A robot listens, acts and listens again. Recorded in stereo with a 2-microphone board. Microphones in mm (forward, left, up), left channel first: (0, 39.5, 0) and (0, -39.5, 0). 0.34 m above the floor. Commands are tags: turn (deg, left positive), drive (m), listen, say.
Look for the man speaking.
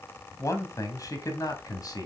<turn deg="55"/>
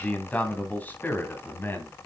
<turn deg="25"/>
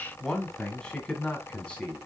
<turn deg="15"/>
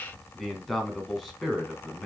<say>Facing the man speaking.</say>